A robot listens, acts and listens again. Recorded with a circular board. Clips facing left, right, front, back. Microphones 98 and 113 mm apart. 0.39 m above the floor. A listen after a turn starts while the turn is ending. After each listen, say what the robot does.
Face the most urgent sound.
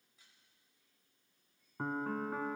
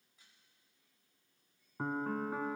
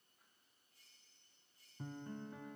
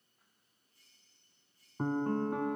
Keep listening.
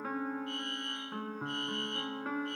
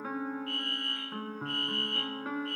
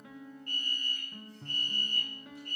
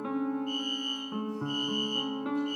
Turn 20° left.
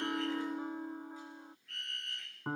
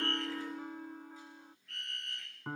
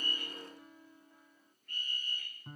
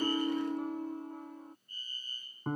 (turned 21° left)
Found it: a fire alarm, straight ahead.